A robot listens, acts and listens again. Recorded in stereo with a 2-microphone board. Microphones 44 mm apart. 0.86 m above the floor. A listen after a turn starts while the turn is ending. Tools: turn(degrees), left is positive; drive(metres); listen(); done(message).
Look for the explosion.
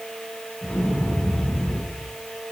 turn(degrees=60)
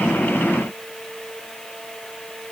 listen()
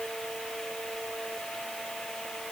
done("I heard an explosion, but can't make it out now. It was about straight ahead or 60° left.")